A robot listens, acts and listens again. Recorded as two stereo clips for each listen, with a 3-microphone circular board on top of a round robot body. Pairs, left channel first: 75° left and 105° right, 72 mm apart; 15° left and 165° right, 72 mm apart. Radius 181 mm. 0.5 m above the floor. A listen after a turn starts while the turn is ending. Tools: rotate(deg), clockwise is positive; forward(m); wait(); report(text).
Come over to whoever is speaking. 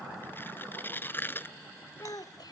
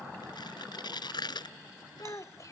rotate(-55)
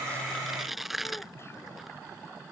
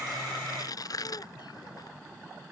wait()
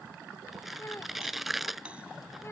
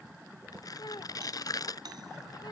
rotate(-25)
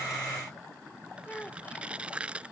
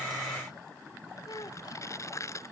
rotate(-10)
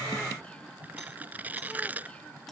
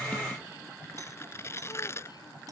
wait()
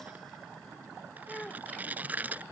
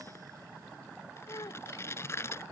forward(1.0)
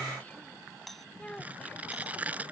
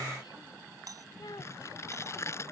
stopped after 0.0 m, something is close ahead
report("Blocked. The child speaking is further on, straight ahead.")